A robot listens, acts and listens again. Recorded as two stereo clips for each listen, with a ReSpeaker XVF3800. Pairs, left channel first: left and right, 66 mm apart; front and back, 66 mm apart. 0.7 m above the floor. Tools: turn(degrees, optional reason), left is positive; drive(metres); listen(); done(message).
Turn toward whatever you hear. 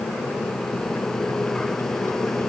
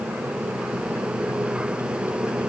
listen()
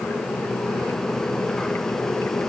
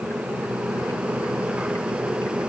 listen()
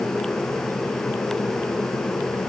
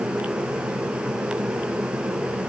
done("I can't make out anything to turn to.")